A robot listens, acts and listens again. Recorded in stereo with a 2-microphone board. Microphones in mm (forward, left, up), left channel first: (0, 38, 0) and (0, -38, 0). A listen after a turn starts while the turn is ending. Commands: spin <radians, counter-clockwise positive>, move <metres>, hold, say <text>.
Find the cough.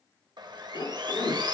spin 1.22
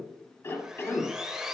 spin 0.61
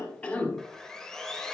spin 0.35
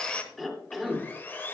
say Facing the cough.